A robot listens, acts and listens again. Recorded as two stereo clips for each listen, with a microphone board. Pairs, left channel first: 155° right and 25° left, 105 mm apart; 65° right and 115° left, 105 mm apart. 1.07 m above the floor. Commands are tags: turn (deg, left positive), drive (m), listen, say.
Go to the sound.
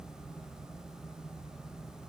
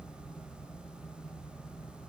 <listen/>
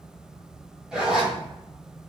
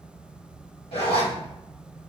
<turn deg="-60"/>
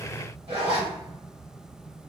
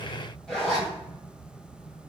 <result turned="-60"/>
<turn deg="20"/>
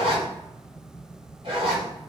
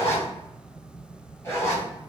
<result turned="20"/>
<drive m="1.0"/>
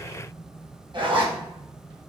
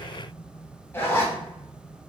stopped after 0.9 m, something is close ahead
<say>Arrived at the zipper, straight ahead.</say>